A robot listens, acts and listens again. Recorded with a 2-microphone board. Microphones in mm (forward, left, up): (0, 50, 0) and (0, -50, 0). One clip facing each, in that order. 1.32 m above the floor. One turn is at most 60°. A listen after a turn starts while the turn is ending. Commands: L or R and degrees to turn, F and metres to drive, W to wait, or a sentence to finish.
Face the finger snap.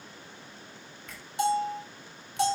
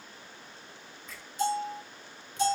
L60
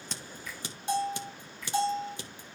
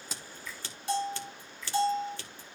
L55
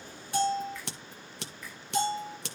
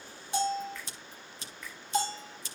Found it: a finger snap, straight ahead, over 4 m away.